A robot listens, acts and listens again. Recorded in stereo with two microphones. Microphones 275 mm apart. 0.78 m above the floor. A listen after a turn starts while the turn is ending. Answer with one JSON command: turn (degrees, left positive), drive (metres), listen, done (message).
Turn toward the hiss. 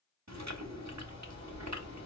{"listen": true}
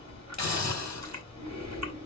{"turn": 75}
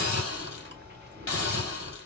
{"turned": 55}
{"turn": 50}
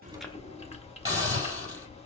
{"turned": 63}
{"turn": -15}
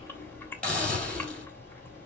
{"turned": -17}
{"done": "Facing the hiss, 2 to 4 m away."}